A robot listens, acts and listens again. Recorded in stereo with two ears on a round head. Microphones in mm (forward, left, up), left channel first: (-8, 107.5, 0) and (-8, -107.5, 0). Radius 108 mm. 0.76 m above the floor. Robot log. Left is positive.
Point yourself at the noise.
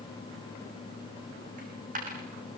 note: The dropped coin: about 35° right or 145° right.
cmd yaw -35
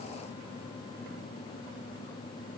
cmd idle
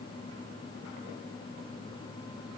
end: I heard a dropped coin, but can't make it out now. It was about straight ahead or 110° right.